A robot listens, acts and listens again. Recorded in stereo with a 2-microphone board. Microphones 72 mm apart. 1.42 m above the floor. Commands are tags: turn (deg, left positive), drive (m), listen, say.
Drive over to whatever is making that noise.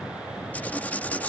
<turn deg="25"/>
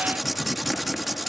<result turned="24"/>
<drive m="1.0"/>
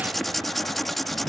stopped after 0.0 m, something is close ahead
<say>Something is in my way. I am facing the writing but have not reached it.</say>